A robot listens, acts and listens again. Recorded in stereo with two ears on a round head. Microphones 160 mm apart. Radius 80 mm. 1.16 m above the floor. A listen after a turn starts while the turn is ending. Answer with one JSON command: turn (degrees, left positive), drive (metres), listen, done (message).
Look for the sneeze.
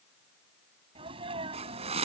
{"turn": -30}
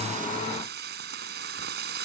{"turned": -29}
{"listen": true}
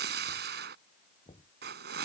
{"done": "I heard a sneeze, but can't make it out now. It was about straight ahead or 120° right."}